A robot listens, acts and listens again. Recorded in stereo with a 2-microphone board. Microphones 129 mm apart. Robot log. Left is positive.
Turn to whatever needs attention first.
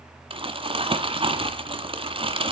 cmd idle
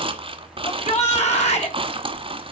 note: The shout: about 60° left or 120° left.
cmd yaw +60
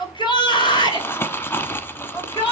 note: So it is at 45° left.
cmd yaw +45
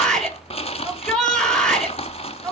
end: Facing the shout.